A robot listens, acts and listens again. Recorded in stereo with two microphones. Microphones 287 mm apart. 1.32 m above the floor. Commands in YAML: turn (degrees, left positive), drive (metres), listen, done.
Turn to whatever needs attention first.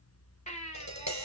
turn: 25
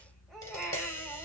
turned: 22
done: "Found it: a baby crying, straight ahead."